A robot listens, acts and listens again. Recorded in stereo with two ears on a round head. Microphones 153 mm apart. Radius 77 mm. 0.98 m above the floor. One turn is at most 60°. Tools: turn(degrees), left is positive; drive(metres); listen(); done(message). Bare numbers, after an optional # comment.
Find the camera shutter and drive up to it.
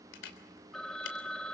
turn(60)
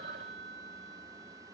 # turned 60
# Nothing new. It was at 30° left.
turn(30)
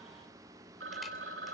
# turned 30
listen()
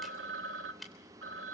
drive(1.0)
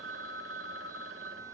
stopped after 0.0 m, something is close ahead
listen()
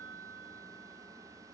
listen()
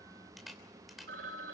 done("Something is in my way. I am facing the camera shutter but have not reached it.")